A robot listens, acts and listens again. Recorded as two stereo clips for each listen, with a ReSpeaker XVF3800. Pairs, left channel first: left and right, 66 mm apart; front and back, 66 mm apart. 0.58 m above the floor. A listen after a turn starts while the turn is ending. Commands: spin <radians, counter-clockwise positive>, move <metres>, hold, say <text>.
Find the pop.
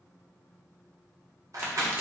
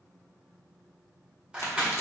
spin -0.61
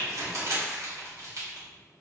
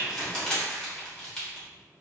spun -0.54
say Facing where the pop came from. I can't hear it now.